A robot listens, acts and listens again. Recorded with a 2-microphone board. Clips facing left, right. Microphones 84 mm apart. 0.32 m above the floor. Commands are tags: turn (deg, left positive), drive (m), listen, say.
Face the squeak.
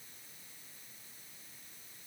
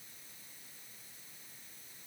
<listen/>
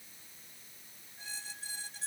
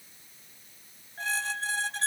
<turn deg="-90"/>
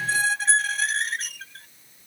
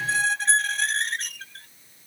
<say>Found it: a squeak, straight ahead.</say>